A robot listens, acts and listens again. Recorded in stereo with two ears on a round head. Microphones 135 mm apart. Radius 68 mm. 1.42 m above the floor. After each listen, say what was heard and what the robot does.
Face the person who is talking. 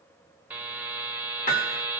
Keep listening.
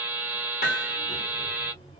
The child speaking: about 35° left or 145° left. Turn 35° left.
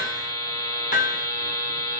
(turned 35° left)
Keep listening.
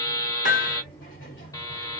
So it is at 105° left. Turn 105° left.
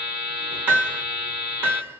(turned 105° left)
The child speaking is now 25° left. Turn 25° left.
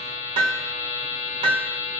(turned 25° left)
Keep listening.
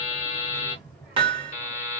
Facing the child speaking.